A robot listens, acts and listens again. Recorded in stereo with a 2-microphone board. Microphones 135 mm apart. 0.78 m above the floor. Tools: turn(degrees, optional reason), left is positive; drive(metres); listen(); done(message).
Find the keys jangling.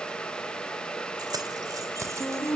turn(degrees=-25, reason="The keys jangling: about 25° right or 155° right.")
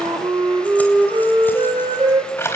turn(degrees=20, reason="So it is at 20° left.")
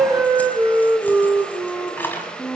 turn(degrees=15, reason="The keys jangling is now 15° left.")
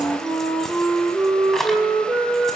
done("Found it: keys jangling, straight ahead.")